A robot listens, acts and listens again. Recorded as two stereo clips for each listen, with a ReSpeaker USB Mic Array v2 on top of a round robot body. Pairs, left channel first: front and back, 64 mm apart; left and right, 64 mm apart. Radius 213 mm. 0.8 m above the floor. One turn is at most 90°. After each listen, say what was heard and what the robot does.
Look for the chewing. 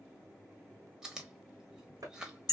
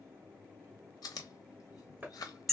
The chewing: 100° left. Turn 90° left.
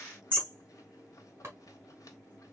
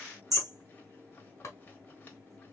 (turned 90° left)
Nothing new. It was at 10° left. Turn 10° left.
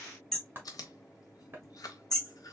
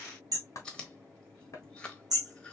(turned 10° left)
The chewing is now 15° left. Turn 15° left.
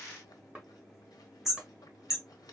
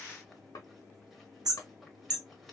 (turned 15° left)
Keep listening.
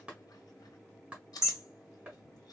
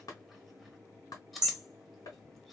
Found it: chewing, straight ahead.